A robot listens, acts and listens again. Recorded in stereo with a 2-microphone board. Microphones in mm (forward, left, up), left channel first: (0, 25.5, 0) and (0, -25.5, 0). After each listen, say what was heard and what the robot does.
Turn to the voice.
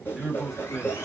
Turn 30° left.
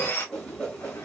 Keep listening.
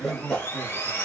So it is at 30° right. Turn 30° right.
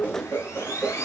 Keep listening.
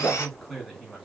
Found it: a man speaking, straight ahead.